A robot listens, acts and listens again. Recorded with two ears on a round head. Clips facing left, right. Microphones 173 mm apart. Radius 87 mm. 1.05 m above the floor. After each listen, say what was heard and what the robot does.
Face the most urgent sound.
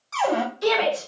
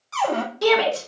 The shout: about 70° right or 110° right. Turn 70° right.
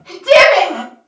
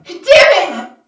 So it is at 35° right. Turn 35° right.
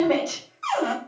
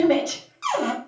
The shout is now 10° right. Turn 10° right.
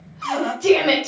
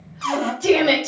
Found it: a shout, straight ahead, 1 to 2 m away.